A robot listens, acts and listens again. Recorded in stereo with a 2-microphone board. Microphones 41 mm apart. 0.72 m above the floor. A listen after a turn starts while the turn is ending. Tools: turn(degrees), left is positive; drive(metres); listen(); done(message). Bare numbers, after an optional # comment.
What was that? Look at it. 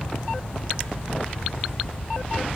listen()
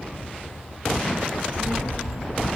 # The child speaking: about 55° right or 125° right.
turn(-55)
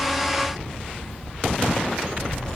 done("Facing the child speaking, over 4 m away.")